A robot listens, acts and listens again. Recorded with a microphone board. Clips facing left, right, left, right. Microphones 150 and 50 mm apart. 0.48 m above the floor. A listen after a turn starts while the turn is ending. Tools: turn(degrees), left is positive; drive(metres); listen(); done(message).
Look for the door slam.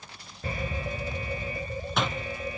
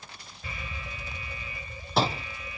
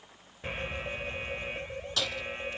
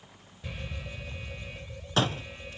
turn(degrees=-35)
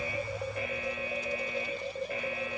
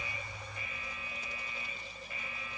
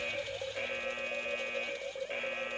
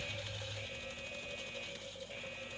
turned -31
listen()
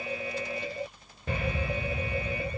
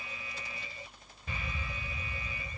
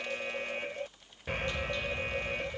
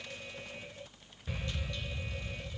done("I heard a door slam, but can't make it out now. It was about 5° right or 115° right.")